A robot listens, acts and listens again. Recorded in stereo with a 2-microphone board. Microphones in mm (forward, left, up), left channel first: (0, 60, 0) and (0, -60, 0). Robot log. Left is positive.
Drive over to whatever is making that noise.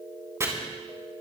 note: The chopping: about 25° right or 155° right.
cmd yaw -25
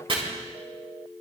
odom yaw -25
note: So it is at 130° right.
cmd yaw -130
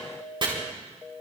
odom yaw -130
note: The chopping is now 45° right.
cmd yaw -45
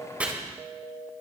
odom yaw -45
note: The chopping is now 10° right.
cmd yaw -10
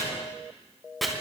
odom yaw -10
cmd fwd 1.0
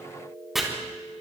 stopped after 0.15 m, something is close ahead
end: Something is in my way. I am facing the chopping but have not reached it.